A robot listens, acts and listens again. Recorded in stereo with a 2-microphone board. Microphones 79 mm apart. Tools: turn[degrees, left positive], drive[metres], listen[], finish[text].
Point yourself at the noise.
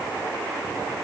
Action: listen[]
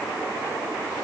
Action: listen[]
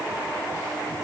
Action: finish[I can't make out anything.]